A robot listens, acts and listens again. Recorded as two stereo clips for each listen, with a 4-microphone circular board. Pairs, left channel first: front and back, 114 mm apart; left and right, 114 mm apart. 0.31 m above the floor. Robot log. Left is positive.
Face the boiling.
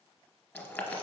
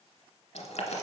note: The boiling: 70° left.
cmd yaw +70
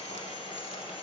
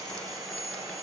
cmd idle
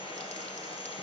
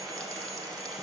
cmd idle
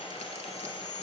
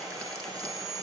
end: Facing where the boiling came from. I can't hear it now.